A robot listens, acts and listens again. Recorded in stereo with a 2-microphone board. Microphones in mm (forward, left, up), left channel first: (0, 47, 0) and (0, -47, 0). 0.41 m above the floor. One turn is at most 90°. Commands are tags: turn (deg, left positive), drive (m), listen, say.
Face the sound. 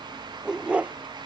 <turn deg="-30"/>
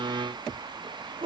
<turn deg="-90"/>
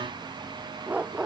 <turn deg="-10"/>
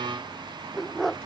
<say>Found it: a dog barking, straight ahead.</say>